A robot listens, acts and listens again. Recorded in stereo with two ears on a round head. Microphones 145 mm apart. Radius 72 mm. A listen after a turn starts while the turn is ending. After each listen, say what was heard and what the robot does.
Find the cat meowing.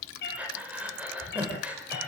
The cat meowing: about 65° left or 115° left. Turn 65° left.
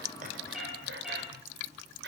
Facing the cat meowing.